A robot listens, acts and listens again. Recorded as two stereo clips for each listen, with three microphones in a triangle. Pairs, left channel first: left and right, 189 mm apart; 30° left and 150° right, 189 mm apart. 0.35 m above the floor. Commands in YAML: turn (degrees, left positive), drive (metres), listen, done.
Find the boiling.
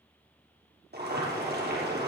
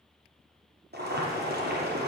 turn: -120
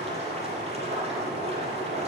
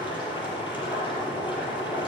turn: -35
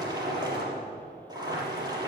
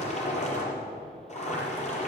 turn: -20
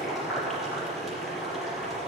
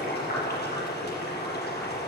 done: "Found it: boiling, straight ahead, over 4 m away."